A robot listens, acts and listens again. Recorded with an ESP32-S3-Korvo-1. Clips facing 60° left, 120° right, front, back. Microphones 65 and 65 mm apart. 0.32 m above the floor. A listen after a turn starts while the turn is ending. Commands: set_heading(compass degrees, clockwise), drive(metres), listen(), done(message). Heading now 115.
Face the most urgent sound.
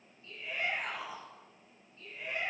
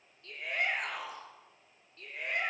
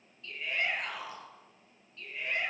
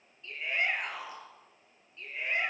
set_heading(230)
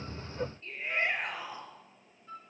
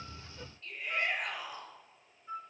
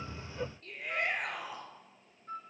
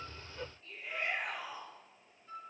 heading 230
done("Found it: a shout, straight ahead.")